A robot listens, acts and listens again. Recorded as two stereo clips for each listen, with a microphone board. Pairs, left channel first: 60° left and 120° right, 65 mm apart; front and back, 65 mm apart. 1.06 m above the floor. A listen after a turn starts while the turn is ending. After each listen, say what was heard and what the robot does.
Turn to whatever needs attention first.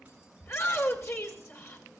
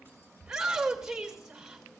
The shout: 100° left. Turn 100° left.
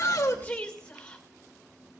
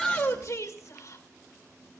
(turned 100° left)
The shout is now 15° right. Turn 15° right.
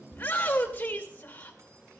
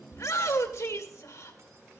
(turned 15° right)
Facing the shout, 1 to 2 m away.